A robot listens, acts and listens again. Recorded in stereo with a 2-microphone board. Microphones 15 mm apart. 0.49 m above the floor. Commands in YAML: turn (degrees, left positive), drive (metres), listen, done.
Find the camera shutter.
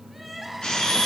turn: 90
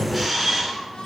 done: "Found it: a camera shutter, straight ahead."